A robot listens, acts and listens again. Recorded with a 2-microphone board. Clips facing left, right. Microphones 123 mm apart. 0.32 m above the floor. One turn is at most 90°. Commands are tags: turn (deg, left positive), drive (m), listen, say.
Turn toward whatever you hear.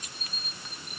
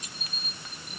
<listen/>
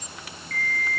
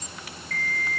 <turn deg="30"/>
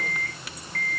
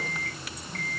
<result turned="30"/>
<turn deg="-25"/>
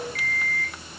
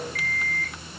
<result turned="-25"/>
<say>Facing the alarm clock, over 4 m away.</say>